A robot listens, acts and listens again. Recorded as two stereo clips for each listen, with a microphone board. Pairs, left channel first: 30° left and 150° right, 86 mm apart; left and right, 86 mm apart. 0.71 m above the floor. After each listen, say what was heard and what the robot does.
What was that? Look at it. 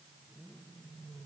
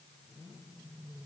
Keep listening.
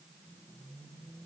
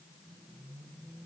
Keep listening.
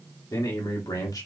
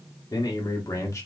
The man speaking: 50° left. Turn 50° left.
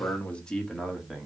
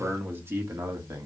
The man speaking is now 65° right. Turn 65° right.
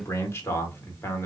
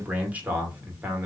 The man speaking is now 25° right. Turn 25° right.
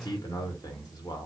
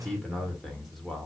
Facing the man speaking, 1 to 2 m away.